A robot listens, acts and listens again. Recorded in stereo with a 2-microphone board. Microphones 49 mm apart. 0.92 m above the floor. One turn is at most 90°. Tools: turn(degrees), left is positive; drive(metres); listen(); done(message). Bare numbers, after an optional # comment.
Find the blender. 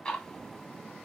listen()
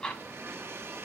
# The blender: about 60° right or 120° right.
turn(-60)
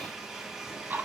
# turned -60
# So it is at 10° right.
turn(-10)
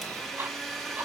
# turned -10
done("Found it: a blender, straight ahead, under 1 m away.")